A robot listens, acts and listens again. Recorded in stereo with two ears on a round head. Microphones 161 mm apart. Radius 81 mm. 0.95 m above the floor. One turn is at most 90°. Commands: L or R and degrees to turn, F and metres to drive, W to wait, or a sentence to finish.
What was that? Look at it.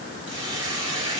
R25
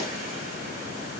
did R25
W
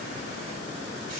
W
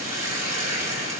R90
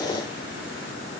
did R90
R40
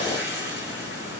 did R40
R15
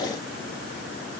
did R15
W
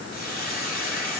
Found it: a hiss, straight ahead, 2 to 4 m away.